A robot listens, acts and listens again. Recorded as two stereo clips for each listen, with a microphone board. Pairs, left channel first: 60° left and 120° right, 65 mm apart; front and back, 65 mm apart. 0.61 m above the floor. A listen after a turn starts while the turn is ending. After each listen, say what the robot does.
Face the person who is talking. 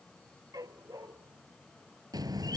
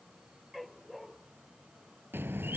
Keep listening.
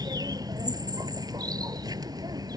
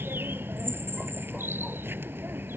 Keep listening.
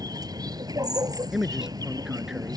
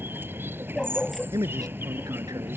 Turn 160° left.
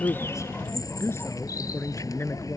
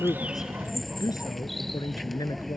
Turn 10° left.
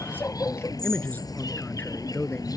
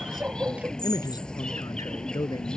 Found it: a man speaking, straight ahead.